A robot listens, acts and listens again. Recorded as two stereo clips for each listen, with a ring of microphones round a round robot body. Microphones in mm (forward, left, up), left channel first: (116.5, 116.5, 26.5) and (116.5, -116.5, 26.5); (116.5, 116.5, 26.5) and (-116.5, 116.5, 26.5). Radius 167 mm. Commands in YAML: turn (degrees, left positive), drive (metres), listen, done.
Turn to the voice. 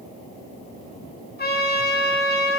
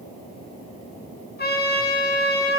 listen: true
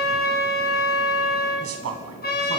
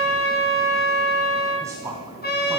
turn: -100
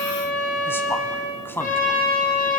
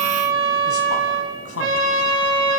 turn: 10
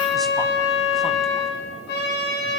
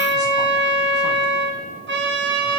listen: true
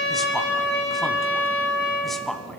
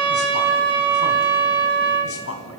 done: "Facing the man speaking."